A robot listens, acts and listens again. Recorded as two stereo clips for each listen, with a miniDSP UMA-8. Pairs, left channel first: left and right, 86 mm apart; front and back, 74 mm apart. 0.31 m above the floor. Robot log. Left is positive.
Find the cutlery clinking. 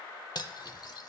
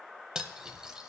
note: The cutlery clinking: 100° left.
cmd yaw +100
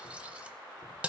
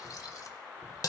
note: The cutlery clinking is now 15° right.
cmd yaw -15
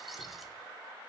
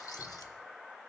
cmd idle
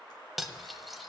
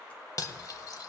end: Facing the cutlery clinking, under 1 m away.